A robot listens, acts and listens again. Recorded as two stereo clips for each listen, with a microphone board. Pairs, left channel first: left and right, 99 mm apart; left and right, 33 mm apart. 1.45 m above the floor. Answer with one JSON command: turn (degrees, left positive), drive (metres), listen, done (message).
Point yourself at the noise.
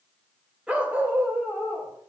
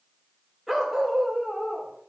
{"turn": -25}
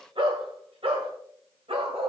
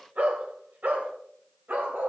{"turn": -110}
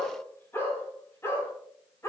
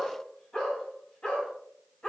{"turn": 30}
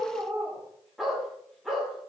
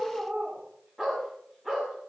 {"done": "Facing the dog barking, over 4 m away."}